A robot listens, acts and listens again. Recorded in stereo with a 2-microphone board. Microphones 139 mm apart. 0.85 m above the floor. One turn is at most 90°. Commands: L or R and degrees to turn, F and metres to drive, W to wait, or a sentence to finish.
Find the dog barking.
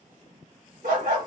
R90
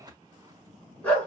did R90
L10
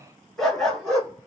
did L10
Found it: a dog barking, straight ahead.